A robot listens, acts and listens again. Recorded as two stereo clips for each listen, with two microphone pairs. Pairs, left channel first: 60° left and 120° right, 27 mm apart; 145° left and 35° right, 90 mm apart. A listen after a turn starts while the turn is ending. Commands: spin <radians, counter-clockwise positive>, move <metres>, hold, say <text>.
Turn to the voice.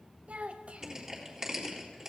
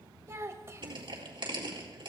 spin -1.57
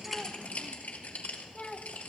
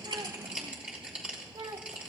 say Facing the child speaking.